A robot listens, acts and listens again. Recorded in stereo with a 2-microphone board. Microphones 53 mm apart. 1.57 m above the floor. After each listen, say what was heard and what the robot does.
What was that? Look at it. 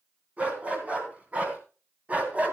The dog barking: about 25° right or 155° right. Turn 25° right.
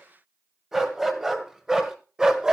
Turn 30° right.
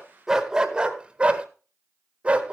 The dog barking: about 20° right or 160° right. Turn 20° right.
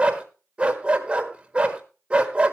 The dog barking: about 20° right or 160° right. Turn 20° right.
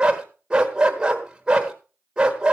The dog barking: about 15° right or 165° right. Turn 15° right.
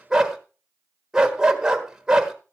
Turn 30° right.
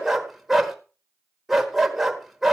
Facing the dog barking.